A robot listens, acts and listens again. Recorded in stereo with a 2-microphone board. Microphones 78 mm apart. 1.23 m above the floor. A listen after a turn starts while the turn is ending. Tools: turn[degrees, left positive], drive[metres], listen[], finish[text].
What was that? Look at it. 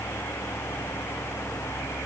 Action: listen[]
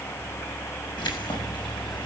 Action: turn[90]
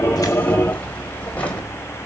Thought: So it is at 15° left.
Action: turn[15]
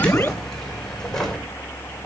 Action: finish[Found it: keys jangling, straight ahead.]